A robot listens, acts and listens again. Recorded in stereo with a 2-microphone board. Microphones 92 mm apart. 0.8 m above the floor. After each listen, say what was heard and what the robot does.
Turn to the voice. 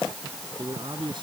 The man speaking: about 60° right or 120° right. Turn 60° right.
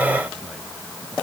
Keep listening.
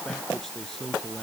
Facing the man speaking.